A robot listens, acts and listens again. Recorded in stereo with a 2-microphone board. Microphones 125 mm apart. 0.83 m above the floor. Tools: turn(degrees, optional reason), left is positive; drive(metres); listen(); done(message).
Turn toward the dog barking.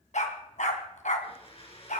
turn(degrees=90)
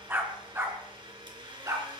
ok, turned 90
turn(degrees=-25, reason="So it is at 25° right.")
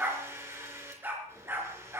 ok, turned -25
turn(degrees=-20, reason="The dog barking is now 20° right.")
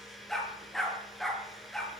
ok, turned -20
done("Found it: a dog barking, straight ahead.")